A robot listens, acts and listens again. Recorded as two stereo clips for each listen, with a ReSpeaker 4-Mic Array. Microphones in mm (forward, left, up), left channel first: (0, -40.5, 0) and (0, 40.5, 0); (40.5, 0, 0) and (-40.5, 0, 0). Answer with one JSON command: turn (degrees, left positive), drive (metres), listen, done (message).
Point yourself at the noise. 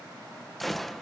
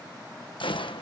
{"done": "Facing the gunshot."}